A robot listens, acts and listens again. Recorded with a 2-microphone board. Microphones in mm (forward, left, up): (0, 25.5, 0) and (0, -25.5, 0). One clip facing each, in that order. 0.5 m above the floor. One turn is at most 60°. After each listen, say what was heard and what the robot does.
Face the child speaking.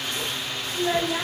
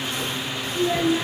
The child speaking: about 70° left or 110° left. Turn 60° left.
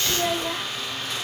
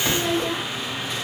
So it is at 15° left. Turn 15° left.
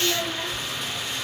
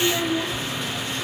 Facing the child speaking.